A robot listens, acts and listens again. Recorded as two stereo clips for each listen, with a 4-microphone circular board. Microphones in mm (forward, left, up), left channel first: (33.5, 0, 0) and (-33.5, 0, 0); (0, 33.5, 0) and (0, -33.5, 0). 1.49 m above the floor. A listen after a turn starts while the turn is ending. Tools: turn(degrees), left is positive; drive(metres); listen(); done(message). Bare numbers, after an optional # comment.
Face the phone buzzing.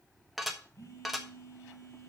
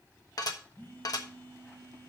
# The phone buzzing: 30° left.
turn(30)
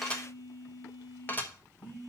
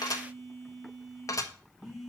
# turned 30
done("Facing the phone buzzing.")